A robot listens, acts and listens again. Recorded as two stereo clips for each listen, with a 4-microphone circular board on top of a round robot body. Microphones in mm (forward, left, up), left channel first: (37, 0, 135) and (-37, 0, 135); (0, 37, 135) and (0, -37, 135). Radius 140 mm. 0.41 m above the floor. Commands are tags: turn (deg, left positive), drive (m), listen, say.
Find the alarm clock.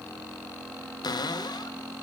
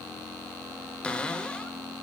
<listen/>
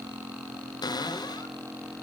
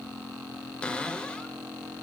<listen/>
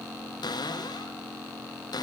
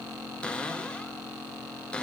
<say>I can't make out an alarm clock to turn to.</say>